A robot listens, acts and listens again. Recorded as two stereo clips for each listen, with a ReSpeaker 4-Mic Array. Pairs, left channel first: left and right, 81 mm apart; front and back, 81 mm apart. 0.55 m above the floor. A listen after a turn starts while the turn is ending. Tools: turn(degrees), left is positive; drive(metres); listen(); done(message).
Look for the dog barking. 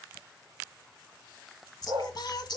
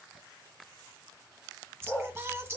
turn(degrees=-70)
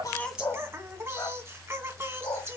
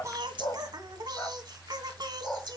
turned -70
turn(degrees=75)
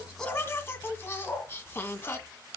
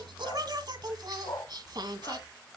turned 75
turn(degrees=30)
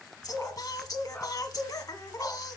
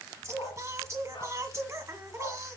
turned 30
turn(degrees=15)
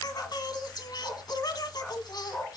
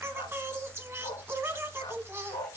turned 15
done("Facing the dog barking, 2 to 4 m away.")